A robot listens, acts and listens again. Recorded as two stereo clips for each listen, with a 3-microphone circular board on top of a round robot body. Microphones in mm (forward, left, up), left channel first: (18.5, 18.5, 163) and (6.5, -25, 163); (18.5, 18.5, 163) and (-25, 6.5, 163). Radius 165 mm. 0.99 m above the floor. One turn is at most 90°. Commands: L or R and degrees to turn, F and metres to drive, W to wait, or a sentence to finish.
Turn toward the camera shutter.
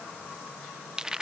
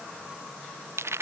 W
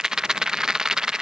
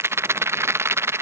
W
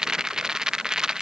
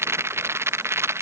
I can't make out a camera shutter, only a rattle.